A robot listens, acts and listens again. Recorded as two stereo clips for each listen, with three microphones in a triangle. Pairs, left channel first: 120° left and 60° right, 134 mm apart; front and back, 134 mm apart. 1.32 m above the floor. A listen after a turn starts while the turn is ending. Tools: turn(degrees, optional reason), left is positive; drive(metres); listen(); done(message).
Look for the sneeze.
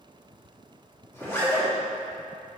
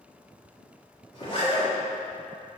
listen()
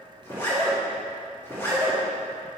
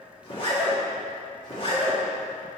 listen()
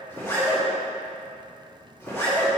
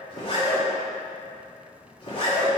done("I can't make out a sneeze to turn to.")